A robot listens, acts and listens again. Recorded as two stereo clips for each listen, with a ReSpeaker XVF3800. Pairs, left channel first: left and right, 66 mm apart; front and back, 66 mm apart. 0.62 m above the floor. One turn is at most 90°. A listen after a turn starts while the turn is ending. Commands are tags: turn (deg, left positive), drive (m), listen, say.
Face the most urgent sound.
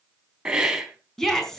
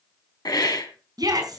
<turn deg="90"/>
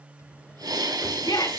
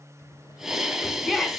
<turn deg="90"/>
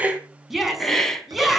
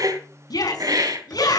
<say>Found it: a shout, straight ahead.</say>